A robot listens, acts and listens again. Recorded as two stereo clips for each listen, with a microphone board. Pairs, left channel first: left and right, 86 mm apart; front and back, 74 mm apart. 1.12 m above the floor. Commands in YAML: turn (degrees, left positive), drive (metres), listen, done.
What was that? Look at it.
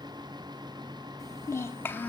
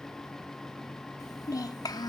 turn: 20
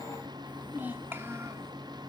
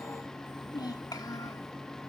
turn: -25
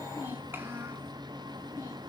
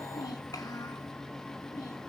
turn: -25
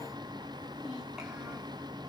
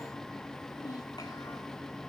listen: true
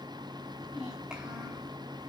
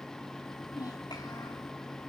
listen: true
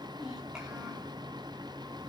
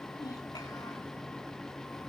done: "I heard a child speaking from this way, but can't make it out now."